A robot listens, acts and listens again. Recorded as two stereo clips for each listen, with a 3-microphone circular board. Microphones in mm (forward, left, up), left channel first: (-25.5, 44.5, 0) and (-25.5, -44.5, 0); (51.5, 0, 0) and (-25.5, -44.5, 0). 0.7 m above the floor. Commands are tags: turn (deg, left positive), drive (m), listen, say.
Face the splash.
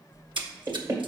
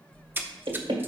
<turn deg="-85"/>
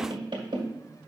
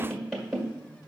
<say>I heard a splash from this way, but can't make it out now.</say>